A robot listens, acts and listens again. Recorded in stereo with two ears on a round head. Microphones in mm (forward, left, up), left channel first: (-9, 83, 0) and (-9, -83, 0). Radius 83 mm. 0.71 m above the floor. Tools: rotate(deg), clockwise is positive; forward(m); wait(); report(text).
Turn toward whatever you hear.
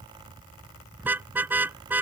rotate(30)
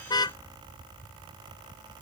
rotate(-20)
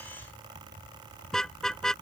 report("Facing the car horn.")